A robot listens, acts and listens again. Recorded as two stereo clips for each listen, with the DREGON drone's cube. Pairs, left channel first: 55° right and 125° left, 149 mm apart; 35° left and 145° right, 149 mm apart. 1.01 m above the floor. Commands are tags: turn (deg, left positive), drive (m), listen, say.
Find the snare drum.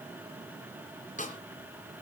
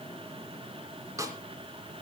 <turn deg="-80"/>
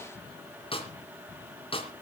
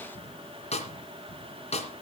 <say>Facing the snare drum.</say>